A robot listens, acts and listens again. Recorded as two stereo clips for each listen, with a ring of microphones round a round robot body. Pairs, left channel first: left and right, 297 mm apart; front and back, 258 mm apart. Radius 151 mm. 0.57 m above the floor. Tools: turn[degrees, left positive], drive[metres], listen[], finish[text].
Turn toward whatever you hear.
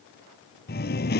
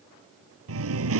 Thought: The singing: 150° left.
Action: turn[150]
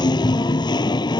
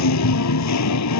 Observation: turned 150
Thought: The singing is now 15° left.
Action: turn[15]
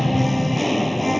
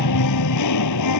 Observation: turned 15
Action: finish[Facing the singing.]